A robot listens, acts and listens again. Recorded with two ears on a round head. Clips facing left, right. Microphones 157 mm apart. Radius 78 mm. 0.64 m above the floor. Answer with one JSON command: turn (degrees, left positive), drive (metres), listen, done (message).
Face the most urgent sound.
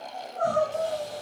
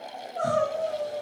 {"turn": -90}
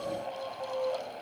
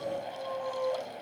{"turn": -10}
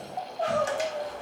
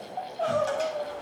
{"done": "Found it: crying, straight ahead."}